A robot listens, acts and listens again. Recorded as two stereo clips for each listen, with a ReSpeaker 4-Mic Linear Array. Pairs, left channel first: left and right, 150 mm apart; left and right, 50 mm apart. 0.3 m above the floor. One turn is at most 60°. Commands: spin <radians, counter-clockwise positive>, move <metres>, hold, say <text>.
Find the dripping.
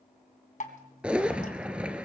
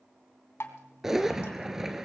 spin 1.05
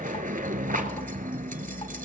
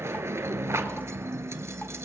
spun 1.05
hold
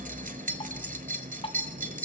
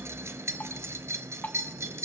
spin 0.79
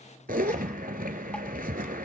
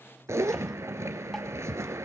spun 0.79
hold
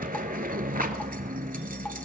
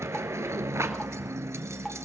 hold
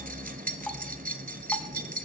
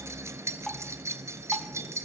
say I heard dripping from this way, but can't make it out now.